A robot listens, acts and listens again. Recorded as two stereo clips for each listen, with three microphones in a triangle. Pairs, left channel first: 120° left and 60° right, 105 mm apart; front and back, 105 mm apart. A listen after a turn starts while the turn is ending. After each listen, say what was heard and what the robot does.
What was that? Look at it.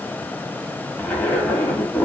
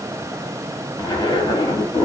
The zipper: 45° left. Turn 45° left.
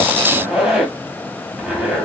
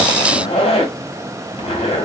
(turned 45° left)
The zipper is now 20° left. Turn 20° left.
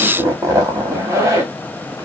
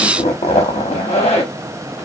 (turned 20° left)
Facing the zipper.